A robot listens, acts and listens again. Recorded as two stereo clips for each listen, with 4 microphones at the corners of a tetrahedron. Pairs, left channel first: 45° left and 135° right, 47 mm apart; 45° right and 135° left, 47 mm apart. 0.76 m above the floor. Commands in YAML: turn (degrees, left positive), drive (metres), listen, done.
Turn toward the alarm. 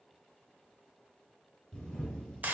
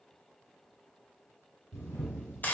listen: true
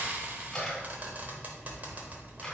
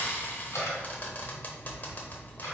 listen: true
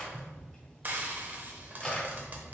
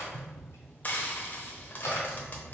done: "I can't make out an alarm, only frying and a camera shutter."